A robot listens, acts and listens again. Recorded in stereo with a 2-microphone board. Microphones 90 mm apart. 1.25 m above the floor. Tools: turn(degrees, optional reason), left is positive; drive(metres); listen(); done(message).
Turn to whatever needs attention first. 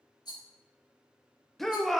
turn(degrees=30)
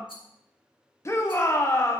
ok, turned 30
turn(degrees=145, reason="So it is at 145° left.")
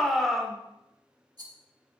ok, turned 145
done("Found it: a shout, straight ahead, 1 to 2 m away.")